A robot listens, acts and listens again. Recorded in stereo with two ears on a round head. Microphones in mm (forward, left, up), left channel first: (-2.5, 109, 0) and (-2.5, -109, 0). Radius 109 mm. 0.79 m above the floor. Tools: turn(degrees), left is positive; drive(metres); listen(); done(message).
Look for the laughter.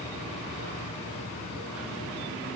listen()
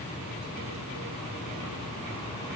listen()
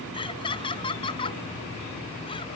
turn(degrees=20)
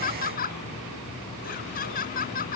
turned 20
turn(degrees=40)
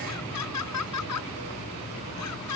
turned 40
turn(degrees=100)
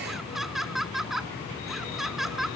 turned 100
done("Facing the laughter.")